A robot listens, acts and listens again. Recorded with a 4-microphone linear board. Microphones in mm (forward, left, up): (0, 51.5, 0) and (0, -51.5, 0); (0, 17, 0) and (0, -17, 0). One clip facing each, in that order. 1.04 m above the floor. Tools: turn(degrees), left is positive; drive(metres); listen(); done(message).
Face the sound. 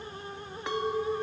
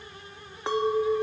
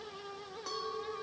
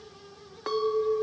turn(degrees=-30)
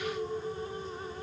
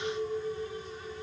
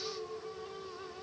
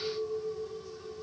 done("Facing the clink.")